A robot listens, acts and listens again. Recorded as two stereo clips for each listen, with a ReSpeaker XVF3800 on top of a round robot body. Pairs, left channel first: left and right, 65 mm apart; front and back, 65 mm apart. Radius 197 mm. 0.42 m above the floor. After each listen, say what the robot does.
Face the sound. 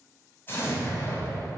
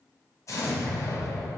Turn 35° left.
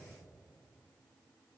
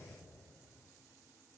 I heard an explosion from this way, but can't make it out now.